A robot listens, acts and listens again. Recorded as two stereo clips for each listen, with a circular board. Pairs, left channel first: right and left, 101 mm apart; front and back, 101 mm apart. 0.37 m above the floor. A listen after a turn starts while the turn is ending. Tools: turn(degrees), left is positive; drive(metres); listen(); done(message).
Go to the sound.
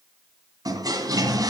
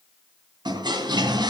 turn(degrees=140)
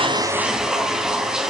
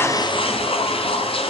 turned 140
drive(metres=1.0)
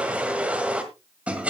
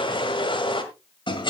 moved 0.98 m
turn(degrees=15)
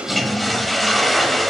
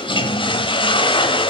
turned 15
drive(metres=1.0)
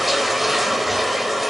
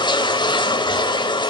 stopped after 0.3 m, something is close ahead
done("Arrived at the toilet flushing, straight ahead.")